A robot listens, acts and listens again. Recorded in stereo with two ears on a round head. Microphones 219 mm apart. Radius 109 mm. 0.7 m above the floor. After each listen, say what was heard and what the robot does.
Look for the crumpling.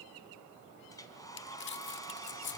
The crumpling: about 50° left or 130° left. Turn 50° left.
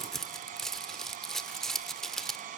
Found it: crumpling, straight ahead, 1 to 2 m away.